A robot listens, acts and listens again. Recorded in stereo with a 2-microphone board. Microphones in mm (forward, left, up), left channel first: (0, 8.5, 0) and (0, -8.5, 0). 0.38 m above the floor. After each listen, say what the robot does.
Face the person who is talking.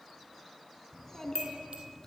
Turn 20° left.
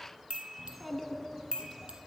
Facing the child speaking.